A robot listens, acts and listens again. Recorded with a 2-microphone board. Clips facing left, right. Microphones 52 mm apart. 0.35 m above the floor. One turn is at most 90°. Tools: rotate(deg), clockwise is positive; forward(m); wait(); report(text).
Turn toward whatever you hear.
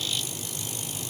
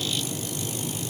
wait()
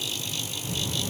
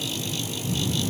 rotate(-25)
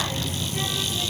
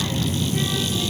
report("Facing the child speaking.")